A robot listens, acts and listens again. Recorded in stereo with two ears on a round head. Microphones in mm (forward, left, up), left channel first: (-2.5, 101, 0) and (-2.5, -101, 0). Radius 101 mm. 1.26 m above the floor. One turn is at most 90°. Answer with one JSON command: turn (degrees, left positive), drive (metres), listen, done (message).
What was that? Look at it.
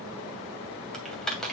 {"turn": 30}
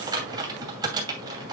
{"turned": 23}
{"turn": -20}
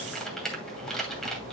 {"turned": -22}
{"done": "Facing the typing on a keyboard."}